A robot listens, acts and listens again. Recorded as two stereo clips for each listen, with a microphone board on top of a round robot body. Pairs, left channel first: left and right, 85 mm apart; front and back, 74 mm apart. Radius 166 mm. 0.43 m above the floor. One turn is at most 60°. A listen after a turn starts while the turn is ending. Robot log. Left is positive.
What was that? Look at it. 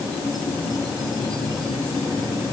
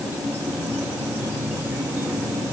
cmd idle
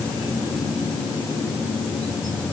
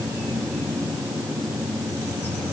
cmd idle
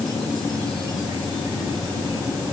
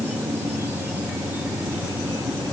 end: I can't make out anything.